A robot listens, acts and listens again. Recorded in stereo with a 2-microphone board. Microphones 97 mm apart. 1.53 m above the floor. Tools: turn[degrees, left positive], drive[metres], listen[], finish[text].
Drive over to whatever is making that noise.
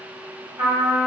Thought: The trumpet: about 55° right or 125° right.
Action: turn[-55]
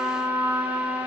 Thought: So it is at 65° right.
Action: turn[-65]
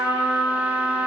Thought: The trumpet is now 15° right.
Action: turn[-15]
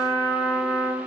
Action: drive[1.0]
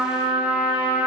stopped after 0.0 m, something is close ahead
Action: finish[Something is in my way. I am facing the trumpet but have not reached it.]